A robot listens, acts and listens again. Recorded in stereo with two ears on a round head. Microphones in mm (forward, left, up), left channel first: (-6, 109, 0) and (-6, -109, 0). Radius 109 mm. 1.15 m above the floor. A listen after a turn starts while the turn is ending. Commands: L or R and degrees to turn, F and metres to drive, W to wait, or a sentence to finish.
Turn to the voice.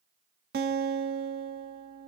W
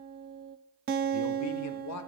L70
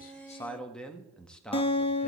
Found it: a man speaking, straight ahead.